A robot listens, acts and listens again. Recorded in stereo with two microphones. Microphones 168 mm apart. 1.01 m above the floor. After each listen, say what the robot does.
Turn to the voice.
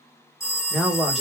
Turn 30° left.
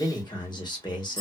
Turn 150° left.
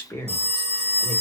Turn 20° left.
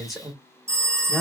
Found it: a man speaking, straight ahead.